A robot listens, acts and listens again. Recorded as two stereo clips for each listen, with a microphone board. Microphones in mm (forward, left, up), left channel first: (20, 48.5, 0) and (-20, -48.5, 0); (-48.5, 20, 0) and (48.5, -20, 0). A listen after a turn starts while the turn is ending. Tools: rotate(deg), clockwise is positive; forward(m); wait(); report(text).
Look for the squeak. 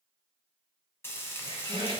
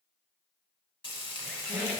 rotate(125)
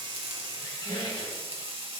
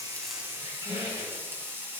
rotate(-15)
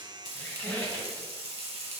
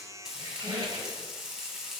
report("Facing the squeak, 1 to 2 m away.")